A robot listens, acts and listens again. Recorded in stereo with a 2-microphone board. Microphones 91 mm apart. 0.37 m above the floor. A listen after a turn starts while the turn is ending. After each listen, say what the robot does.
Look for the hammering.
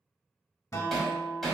Turn 30° left.
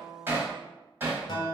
Turn 25° right.
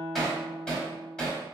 Turn 10° left.
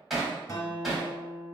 Found it: hammering, straight ahead.